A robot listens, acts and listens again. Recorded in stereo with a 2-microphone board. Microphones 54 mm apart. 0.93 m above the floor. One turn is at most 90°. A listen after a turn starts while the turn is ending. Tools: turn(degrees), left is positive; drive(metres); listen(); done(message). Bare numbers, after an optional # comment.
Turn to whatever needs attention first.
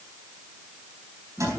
listen()
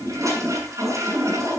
listen()
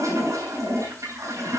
done("I can't make out anything urgent to turn to.")